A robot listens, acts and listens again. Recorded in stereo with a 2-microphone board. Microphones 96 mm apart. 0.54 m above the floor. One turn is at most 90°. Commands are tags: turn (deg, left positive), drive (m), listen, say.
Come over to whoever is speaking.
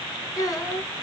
<turn deg="35"/>
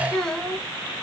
<drive m="1.0"/>
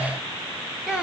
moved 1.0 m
<drive m="1.0"/>
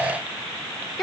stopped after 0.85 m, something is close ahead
<say>Arrived at the child speaking, straight ahead.</say>